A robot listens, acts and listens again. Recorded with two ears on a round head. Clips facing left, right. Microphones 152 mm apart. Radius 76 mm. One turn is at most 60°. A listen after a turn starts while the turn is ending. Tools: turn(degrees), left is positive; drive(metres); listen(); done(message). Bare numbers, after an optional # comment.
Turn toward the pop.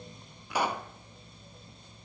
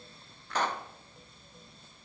turn(30)
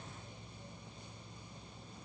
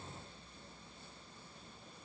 listen()
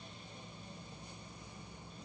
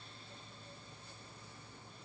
done("I heard a pop, but can't make it out now. It was about 20° right or 140° left.")